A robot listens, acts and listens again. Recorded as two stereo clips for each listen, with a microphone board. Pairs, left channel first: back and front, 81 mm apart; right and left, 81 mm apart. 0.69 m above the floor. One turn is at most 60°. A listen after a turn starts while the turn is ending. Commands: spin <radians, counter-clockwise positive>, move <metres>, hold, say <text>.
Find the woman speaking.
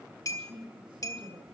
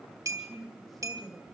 say Found it: a woman speaking, straight ahead.